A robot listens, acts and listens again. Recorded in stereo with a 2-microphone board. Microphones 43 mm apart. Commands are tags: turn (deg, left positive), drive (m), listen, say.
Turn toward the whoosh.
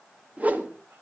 <turn deg="-35"/>
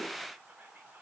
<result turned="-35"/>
<listen/>
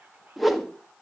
<say>Found it: a whoosh, straight ahead, 1 to 2 m away.</say>